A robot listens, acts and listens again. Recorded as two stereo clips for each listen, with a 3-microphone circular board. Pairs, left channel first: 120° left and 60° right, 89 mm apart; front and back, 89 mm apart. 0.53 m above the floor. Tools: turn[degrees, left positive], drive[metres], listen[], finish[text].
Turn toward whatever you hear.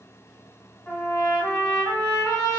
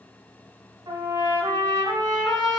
Thought: The trumpet: 170° right.
Action: turn[-170]
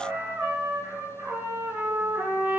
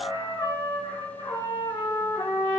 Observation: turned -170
Action: finish[Found it: a trumpet, straight ahead, 1 to 2 m away.]